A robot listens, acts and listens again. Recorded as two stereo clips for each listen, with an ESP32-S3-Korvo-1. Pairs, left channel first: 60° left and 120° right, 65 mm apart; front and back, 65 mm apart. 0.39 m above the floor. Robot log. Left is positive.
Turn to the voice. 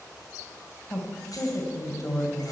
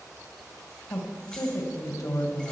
note: The woman speaking: 20° left.
cmd yaw +20
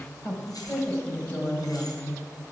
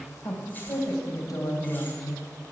end: Found it: a woman speaking, straight ahead, 2 to 4 m away.